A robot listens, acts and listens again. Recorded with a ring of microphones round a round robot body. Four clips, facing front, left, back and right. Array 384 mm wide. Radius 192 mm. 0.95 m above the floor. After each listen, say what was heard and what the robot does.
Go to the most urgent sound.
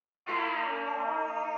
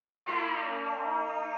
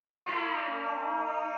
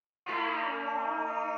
The baby crying: 160° right. Turn 160° right.
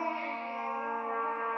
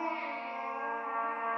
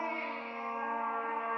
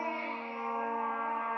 The baby crying is now 45° left. Turn 45° left.
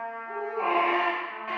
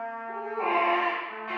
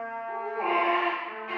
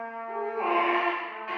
The baby crying is now 10° right. Turn 10° right.
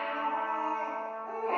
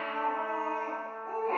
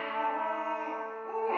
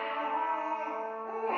Drive 1.0 m forward.
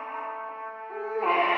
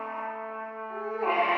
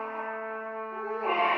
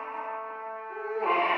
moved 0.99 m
Drive 1.0 m forward.
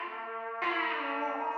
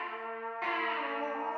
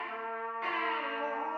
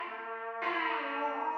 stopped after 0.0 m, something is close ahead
I am next to the baby crying.